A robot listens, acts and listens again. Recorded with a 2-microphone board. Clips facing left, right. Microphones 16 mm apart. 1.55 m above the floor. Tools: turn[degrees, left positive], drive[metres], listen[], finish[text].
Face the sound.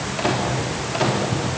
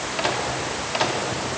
Thought: The microwave: about 15° right or 165° right.
Action: turn[-15]
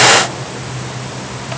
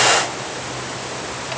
Action: listen[]
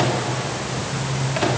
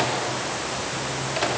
Action: finish[Facing the microwave, 2 to 4 m away.]